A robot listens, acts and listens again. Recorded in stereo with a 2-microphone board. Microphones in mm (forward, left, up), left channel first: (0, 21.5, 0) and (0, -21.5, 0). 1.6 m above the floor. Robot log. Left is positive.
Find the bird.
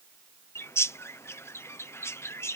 note: The bird: about 75° left or 105° left.
cmd yaw +75
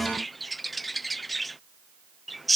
end: Facing the bird.